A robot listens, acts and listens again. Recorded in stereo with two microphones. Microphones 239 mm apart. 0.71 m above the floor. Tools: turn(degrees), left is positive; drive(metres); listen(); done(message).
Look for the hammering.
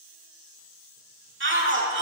listen()
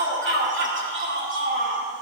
listen()
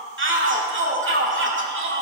done("I can't make out hammering to turn to.")